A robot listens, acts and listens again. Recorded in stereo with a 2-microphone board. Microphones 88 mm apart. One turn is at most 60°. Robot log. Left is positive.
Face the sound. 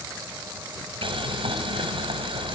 note: The boiling: about 70° right or 110° right.
cmd yaw -60
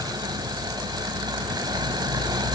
note: So it is at 50° right.
cmd yaw -50
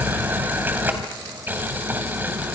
note: The boiling is now 20° right.
cmd yaw -20
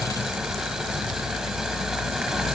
end: Found it: boiling, straight ahead, 2 to 4 m away.